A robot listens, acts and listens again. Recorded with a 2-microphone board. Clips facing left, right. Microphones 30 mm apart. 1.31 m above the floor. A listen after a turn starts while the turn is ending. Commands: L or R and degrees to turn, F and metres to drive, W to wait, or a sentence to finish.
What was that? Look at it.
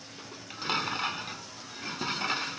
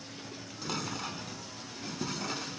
L45
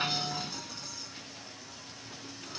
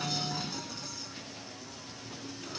Facing the dishes clattering.